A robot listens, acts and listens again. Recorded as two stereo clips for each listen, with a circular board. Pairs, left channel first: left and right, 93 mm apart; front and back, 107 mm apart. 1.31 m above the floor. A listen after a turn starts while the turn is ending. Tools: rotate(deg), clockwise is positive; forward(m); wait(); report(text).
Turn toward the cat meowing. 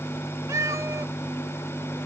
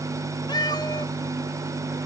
rotate(40)
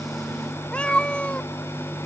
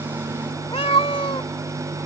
rotate(-15)
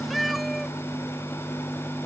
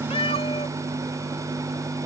report("Facing the cat meowing.")